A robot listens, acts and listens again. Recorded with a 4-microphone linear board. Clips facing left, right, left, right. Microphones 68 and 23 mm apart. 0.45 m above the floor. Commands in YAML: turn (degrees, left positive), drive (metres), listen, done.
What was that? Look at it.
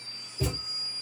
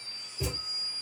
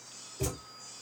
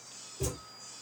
turn: 50
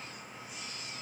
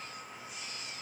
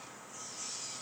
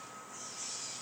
listen: true
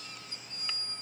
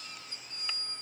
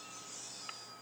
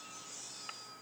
done: "I heard a thud, but can't make it out now. It was about straight ahead or 80° left."